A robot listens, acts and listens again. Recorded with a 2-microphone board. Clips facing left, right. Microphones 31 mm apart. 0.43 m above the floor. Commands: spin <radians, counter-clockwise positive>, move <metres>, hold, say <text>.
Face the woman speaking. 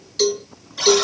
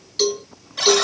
hold
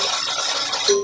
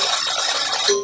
hold
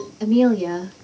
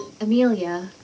spin -0.79
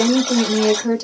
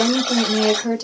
spin -0.17
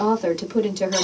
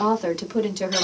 say Facing the woman speaking, 1 to 2 m away.